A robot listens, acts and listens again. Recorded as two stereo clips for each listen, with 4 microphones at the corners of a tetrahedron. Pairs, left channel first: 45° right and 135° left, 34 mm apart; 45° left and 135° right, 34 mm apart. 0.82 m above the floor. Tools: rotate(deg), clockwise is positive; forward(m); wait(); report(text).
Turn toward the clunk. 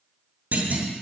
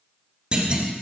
rotate(-165)
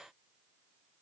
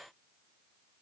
report("Facing where the clunk came from. I can't hear it now.")